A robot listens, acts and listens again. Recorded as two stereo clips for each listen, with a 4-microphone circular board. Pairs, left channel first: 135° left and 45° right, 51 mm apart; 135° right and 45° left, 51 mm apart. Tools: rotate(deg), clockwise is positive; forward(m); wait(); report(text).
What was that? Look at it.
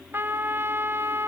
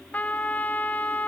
rotate(80)
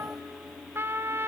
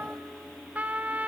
rotate(15)
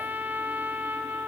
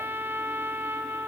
report("Found it: a trumpet, straight ahead.")